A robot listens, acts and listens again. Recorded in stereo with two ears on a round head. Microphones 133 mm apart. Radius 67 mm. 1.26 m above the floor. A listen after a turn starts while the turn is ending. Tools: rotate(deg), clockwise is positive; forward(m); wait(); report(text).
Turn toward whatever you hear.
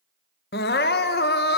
rotate(-90)
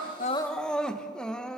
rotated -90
report("Found it: crying, straight ahead.")